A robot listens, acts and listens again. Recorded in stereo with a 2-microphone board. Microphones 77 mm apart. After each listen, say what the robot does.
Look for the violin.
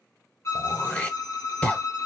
Turn 45° left.
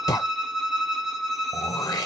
Found it: a violin, straight ahead, under 1 m away.